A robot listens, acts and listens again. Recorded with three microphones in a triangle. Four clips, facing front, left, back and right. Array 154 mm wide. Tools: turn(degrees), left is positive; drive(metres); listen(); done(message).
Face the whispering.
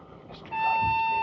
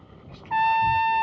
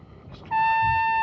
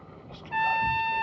done("Facing the whispering.")